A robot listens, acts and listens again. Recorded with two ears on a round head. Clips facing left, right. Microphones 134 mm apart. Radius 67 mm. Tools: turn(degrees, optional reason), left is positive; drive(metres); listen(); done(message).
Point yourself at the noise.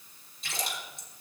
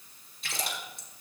turn(degrees=-50, reason="The splash: about 50° right or 130° right.")
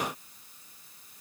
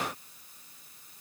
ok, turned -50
listen()
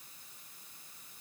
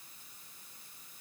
done("I heard a splash, but can't make it out now. It was about straight ahead or 80° right.")